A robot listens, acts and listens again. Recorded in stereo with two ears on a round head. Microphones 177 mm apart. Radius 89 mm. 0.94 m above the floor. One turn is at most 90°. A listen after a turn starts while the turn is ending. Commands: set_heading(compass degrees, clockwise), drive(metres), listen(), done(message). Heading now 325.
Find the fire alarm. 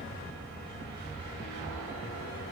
listen()
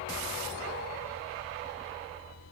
listen()
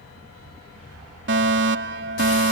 set_heading(30)
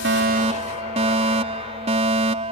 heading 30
set_heading(65)
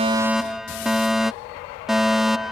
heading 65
done("Found it: a fire alarm, straight ahead.")